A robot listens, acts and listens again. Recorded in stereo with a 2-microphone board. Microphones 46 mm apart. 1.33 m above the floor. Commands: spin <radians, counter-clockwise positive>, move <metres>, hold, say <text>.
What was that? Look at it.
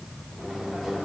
spin -0.52
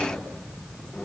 hold
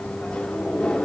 spin 0.35
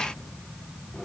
hold
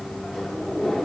say Found it: a microwave, straight ahead.